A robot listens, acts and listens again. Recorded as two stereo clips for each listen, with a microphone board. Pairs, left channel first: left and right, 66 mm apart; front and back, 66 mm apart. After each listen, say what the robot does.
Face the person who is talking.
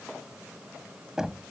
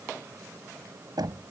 Keep listening.
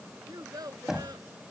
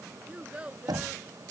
Turn 110° right.
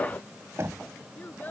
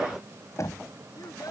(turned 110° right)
Keep listening.
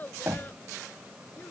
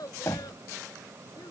Turn 25° left.
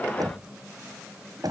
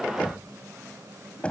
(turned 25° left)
Keep listening.
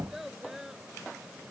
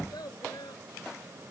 Facing the child speaking.